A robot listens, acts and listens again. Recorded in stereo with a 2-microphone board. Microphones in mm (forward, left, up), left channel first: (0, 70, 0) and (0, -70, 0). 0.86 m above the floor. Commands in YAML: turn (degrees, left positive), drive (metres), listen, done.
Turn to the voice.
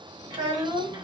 turn: -35
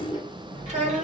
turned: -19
turn: -130
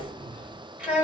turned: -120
turn: -10
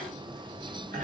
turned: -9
listen: true
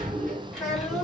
done: "Found it: a child speaking, straight ahead, 1 to 2 m away."